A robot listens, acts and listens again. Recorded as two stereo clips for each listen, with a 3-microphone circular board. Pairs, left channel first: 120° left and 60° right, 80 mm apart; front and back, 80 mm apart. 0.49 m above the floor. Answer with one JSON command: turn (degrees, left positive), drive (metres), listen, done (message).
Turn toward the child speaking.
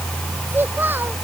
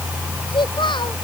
{"done": "Facing the child speaking."}